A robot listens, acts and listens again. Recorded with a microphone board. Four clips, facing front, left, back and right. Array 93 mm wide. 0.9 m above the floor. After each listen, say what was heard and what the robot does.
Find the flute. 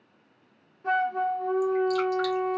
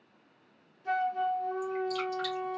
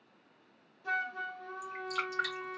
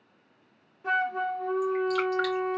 The flute: 60° right. Turn 60° right.
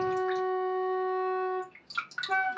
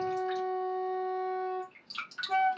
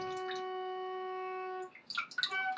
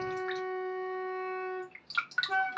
The flute is now 10° right. Turn 10° right.
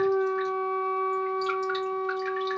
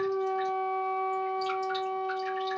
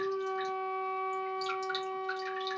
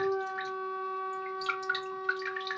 Found it: a flute, straight ahead, 1 to 2 m away.